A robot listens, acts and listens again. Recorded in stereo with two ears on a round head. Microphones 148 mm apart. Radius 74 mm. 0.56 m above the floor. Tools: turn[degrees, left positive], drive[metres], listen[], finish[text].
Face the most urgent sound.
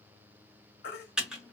Thought: The baby crying: about 60° left or 120° left.
Action: turn[60]
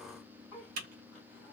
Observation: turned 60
Action: listen[]
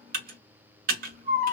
Thought: So it is at 10° left.
Action: turn[10]
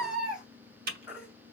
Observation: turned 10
Action: finish[Found it: a baby crying, straight ahead, 1 to 2 m away.]